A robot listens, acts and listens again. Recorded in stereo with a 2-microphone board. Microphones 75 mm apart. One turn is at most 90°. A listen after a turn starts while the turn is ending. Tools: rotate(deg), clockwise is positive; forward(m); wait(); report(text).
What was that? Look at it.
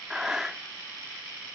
rotate(30)
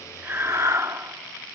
rotate(90)
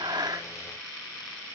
rotate(50)
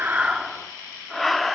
report("Found it: breathing, straight ahead.")